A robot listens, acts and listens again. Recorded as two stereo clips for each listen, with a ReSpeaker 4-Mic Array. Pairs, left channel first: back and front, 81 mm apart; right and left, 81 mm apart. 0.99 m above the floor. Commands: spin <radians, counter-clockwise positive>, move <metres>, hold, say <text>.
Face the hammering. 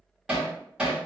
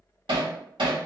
spin 1.40
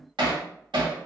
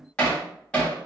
spin -0.26
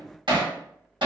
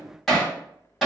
say Facing the hammering, 1 to 2 m away.